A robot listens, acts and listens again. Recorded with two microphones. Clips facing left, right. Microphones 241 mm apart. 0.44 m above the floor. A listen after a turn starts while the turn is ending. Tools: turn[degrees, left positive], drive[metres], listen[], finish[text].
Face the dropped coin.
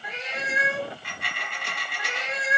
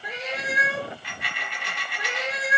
Thought: The dropped coin: about 50° left or 130° left.
Action: turn[50]
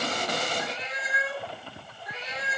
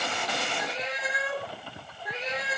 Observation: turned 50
Action: listen[]
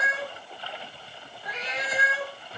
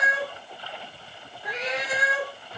Action: finish[I heard a dropped coin, but can't make it out now. It was about straight ahead or 80° left.]